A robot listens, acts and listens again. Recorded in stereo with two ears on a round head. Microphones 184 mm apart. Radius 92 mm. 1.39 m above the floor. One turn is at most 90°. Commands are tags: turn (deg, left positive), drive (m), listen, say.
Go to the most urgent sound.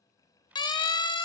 <turn deg="20"/>
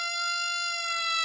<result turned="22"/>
<drive m="1.0"/>
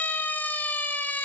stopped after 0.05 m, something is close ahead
<turn deg="10"/>
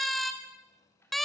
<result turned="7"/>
<say>Something is in my way. I am facing the siren but have not reached it.</say>